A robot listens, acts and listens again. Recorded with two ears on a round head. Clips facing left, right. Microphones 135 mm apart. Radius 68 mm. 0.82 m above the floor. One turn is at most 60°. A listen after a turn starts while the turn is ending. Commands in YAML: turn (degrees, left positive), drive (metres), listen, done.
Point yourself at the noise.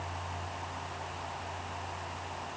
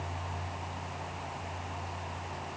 listen: true
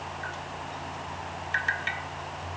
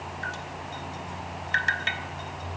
turn: -55
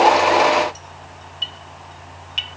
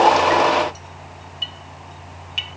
done: "Facing the dripping."